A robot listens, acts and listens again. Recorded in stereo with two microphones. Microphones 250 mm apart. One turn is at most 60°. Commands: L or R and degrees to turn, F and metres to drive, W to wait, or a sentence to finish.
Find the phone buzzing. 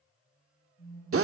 L60
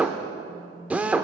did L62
L40
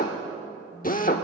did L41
W
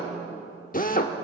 W
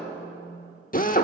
Facing the phone buzzing.